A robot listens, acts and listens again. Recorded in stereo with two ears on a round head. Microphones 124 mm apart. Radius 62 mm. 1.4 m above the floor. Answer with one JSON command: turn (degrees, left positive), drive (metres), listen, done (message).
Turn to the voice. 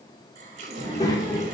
{"turn": 30}
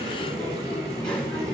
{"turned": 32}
{"turn": 10}
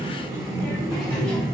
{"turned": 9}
{"done": "Facing the child speaking, 2 to 4 m away."}